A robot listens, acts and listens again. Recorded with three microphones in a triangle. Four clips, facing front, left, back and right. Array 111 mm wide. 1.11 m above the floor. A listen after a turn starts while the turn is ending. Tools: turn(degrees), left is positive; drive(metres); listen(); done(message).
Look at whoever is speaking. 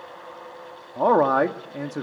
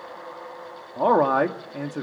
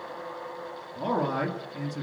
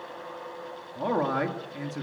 turn(degrees=40)
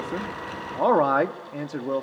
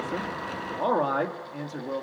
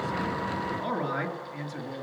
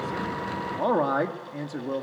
done("Facing the man speaking.")